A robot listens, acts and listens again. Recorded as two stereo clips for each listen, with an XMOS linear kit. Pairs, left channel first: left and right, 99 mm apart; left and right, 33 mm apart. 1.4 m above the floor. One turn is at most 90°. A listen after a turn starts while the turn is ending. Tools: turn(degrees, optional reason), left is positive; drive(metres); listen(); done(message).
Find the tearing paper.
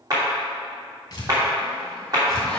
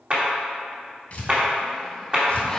turn(degrees=40, reason="The tearing paper: about 40° left or 140° left.")
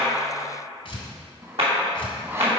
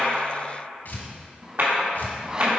turn(degrees=90, reason="So it is at 95° left.")
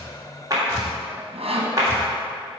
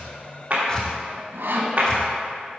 listen()
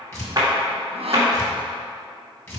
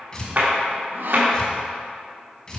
turn(degrees=30, reason="The tearing paper is now 30° left.")
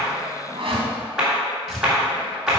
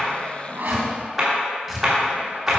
done("Found it: tearing paper, straight ahead.")